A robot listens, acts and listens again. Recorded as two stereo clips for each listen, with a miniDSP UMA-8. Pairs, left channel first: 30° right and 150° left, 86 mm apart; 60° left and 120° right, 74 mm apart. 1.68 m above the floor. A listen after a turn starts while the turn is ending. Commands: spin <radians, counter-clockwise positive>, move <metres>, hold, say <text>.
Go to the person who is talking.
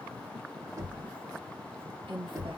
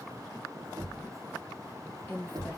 spin 2.18
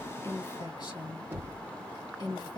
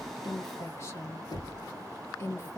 move 1.0
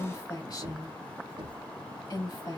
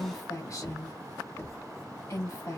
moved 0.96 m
spin 0.17
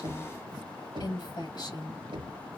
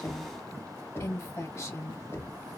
move 1.0
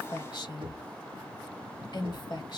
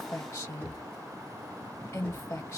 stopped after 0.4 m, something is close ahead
say Arrived at the woman speaking, straight ahead.